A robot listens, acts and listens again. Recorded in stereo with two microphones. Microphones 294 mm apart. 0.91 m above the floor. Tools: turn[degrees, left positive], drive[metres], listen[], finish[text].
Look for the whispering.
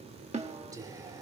Action: turn[-30]
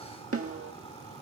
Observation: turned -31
Action: listen[]
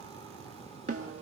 Action: listen[]
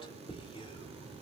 Thought: So it is at 20° left.
Action: turn[20]
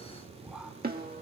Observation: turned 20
Action: finish[Found it: whispering, straight ahead.]